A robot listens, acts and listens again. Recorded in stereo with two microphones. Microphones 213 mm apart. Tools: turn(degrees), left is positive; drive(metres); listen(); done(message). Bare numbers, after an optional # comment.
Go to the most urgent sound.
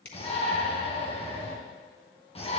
# The shout: about 25° left or 155° left.
turn(25)
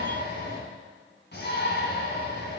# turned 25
# So it is at 125° left.
turn(125)
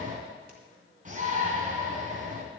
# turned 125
# The shout is now 40° right.
turn(-40)
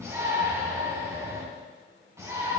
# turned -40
# The shout is now 15° right.
turn(-15)
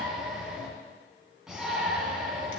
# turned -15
drive(1.0)
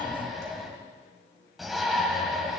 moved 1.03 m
drive(1.0)
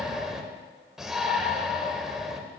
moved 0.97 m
drive(1.0)
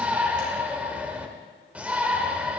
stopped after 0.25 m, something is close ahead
done("Arrived at the shout, straight ahead.")